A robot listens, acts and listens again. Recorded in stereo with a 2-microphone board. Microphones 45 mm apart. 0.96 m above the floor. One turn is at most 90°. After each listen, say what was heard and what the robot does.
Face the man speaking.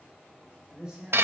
The man speaking: about 20° right or 160° right. Turn 20° right.
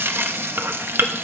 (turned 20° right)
Keep listening.
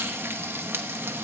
Keep listening.
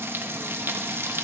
I heard a man speaking, but can't make it out now. It was about straight ahead or 140° right.